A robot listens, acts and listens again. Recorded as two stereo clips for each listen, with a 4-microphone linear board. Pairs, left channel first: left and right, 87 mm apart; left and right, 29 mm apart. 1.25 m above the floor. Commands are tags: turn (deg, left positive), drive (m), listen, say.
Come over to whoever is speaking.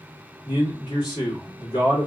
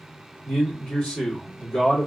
<turn deg="65"/>
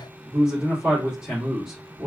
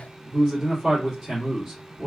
<drive m="1.0"/>
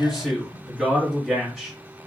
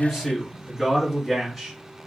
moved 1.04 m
<drive m="1.0"/>
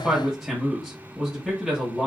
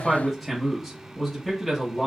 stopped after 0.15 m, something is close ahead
<say>I am next to the man speaking.</say>